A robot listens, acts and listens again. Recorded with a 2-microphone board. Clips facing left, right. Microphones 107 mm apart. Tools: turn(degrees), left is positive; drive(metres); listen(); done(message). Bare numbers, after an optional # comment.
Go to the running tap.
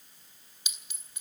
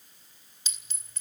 listen()
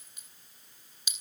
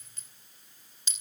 listen()
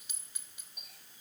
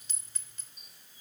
turn(90)
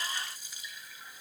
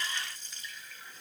# So it is at 10° left.
turn(10)
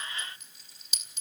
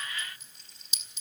drive(1.0)
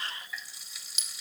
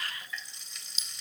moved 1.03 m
drive(1.0)
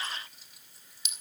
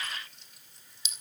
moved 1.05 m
drive(1.0)
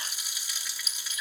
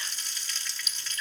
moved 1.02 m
# The running tap is now 10° left.
turn(10)
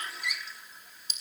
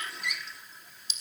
drive(1.0)
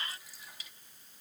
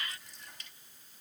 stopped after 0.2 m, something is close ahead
done("I am next to the running tap.")